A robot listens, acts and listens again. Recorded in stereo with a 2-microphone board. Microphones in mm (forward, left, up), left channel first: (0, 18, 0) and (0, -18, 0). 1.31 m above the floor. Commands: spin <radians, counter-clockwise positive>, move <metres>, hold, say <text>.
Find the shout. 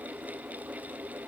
hold
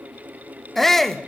spin 0.52
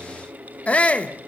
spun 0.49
spin 2.44
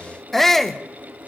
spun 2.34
spin 0.17
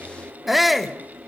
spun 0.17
say Found it: a shout, straight ahead.